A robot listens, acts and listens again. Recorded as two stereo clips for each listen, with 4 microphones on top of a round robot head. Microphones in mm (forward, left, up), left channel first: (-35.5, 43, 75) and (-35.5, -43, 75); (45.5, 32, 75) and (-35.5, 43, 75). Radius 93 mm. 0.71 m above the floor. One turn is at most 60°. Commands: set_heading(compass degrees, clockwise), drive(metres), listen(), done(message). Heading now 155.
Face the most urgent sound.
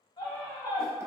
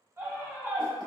set_heading(95)
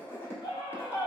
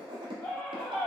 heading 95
set_heading(35)
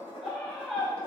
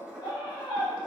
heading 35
done("Found it: a scream, straight ahead.")